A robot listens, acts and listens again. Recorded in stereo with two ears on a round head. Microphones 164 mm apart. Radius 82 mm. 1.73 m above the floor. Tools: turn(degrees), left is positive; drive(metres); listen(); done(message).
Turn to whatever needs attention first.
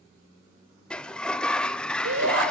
turn(degrees=-90)
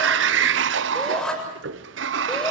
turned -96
done("Facing the shout, over 4 m away.")